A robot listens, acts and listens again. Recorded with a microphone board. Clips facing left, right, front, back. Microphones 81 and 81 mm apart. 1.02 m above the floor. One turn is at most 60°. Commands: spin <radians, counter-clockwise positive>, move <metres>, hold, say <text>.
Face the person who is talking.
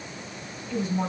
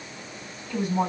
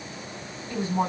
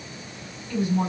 spin -1.05
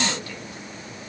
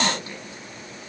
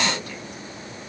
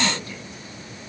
hold
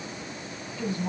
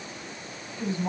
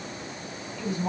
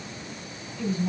spin -0.44
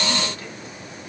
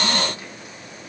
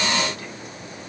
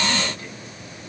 hold
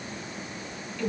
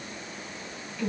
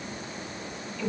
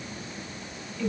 spin -0.26
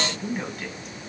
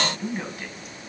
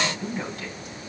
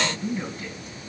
say Found it: a woman speaking, straight ahead.